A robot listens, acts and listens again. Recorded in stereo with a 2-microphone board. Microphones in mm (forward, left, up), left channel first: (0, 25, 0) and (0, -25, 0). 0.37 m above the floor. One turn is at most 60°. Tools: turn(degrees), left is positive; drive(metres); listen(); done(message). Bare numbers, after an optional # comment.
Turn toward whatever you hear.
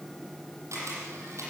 turn(-60)
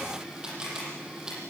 # So it is at 15° right.
turn(-15)
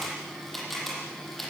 done("Found it: a camera shutter, straight ahead.")